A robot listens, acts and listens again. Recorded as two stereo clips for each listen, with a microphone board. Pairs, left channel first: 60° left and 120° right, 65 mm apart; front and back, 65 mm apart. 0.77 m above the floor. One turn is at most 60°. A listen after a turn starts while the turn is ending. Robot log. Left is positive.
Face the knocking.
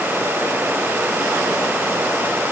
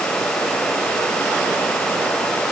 cmd idle
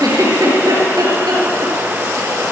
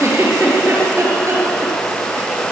cmd idle
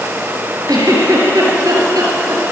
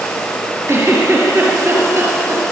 end: I can't make out knocking, only a giggle.